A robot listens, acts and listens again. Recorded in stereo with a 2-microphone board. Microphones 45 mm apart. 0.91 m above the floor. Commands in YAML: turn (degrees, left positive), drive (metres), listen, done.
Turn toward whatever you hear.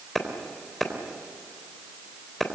turn: 30
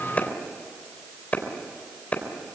turn: 145
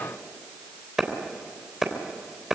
turn: -10
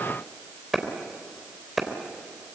done: "Found it: a clap, straight ahead."